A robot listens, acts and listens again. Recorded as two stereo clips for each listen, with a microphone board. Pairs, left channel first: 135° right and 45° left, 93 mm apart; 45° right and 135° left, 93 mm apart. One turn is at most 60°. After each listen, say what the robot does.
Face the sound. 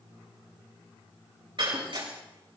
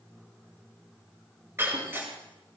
Turn 60° left.
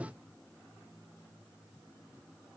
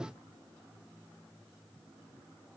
Turn 10° left.
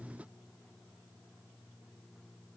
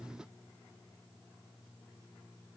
Facing where the breaking glass came from. I can't hear it now.